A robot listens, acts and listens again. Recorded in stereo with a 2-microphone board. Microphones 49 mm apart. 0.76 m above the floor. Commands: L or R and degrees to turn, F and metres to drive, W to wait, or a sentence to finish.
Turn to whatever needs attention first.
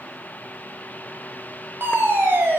R45
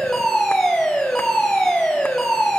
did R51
Facing the fire alarm, over 4 m away.